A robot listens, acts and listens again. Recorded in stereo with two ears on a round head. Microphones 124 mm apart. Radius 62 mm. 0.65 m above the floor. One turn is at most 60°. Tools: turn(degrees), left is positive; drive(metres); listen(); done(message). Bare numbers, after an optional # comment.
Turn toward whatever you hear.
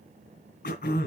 # The throat clearing: about 70° left or 110° left.
turn(60)
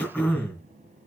# So it is at 10° left.
turn(10)
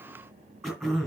done("Facing the throat clearing.")